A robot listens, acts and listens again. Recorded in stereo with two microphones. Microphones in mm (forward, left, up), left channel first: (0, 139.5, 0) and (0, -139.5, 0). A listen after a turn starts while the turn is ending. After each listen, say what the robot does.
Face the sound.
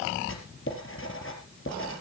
Turn 50° left.
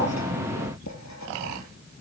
Keep listening.
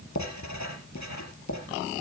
Turn 80° left.
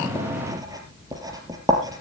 Turn 15° right.
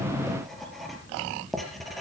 Facing the writing, 2 to 4 m away.